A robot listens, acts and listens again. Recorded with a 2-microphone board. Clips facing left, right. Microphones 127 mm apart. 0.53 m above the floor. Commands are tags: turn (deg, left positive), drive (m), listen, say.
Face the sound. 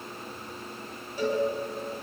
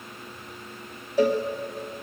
<turn deg="-90"/>
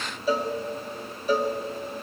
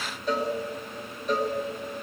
<say>Facing the cowbell, 2 to 4 m away.</say>